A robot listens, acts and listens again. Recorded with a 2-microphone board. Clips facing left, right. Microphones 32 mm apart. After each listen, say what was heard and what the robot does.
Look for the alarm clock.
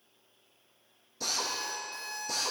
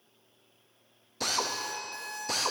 The alarm clock: about 40° right or 140° right. Turn 40° right.
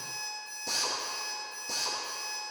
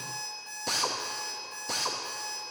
So it is at 100° right. Turn 100° right.
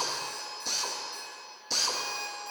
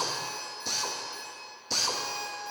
The alarm clock is now 30° right. Turn 30° right.
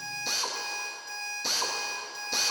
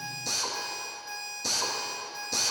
The alarm clock is now 10° right. Turn 10° right.
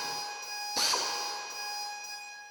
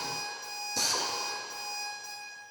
Found it: an alarm clock, straight ahead, 2 to 4 m away.